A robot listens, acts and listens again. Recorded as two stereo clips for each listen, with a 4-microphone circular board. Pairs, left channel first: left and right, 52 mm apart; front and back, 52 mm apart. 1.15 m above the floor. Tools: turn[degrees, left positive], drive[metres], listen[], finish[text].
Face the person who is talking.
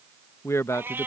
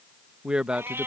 Thought: The man speaking: 110° left.
Action: turn[110]
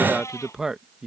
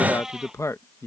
Thought: The man speaking is now 10° right.
Action: turn[-10]
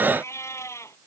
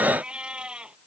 Action: listen[]
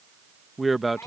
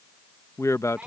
Action: finish[Facing the man speaking.]